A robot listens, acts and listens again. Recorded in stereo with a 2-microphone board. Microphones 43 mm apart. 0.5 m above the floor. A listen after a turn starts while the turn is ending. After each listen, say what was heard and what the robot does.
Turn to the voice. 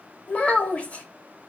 The child speaking: about 30° left or 150° left. Turn 30° left.
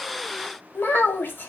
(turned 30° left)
So it is at 115° left. Turn 115° left.
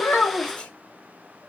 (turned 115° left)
Keep listening.
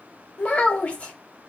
The child speaking is now 35° left. Turn 35° left.
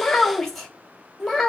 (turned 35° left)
Facing the child speaking.